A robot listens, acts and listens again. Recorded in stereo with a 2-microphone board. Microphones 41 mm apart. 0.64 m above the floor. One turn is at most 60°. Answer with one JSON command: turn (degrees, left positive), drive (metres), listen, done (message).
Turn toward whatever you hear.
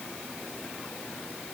{"listen": true}
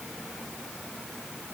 {"listen": true}
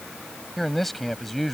{"turn": 30}
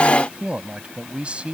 {"turn": -30}
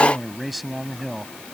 {"done": "Found it: a man speaking, straight ahead."}